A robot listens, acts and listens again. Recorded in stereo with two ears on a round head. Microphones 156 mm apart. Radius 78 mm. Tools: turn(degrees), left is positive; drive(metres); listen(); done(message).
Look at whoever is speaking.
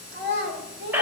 turn(degrees=-65)
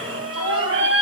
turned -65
listen()
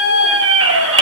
listen()
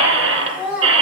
done("Found it: a child speaking, straight ahead, 2 to 4 m away.")